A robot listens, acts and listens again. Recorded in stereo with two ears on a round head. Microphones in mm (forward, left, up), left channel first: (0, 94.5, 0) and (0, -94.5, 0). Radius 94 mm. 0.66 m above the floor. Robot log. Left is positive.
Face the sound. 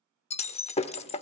note: The breaking glass: about 30° left or 150° left.
cmd yaw +30
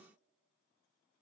cmd idle
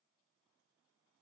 end: I heard breaking glass, but can't make it out now. It was about straight ahead or 120° left.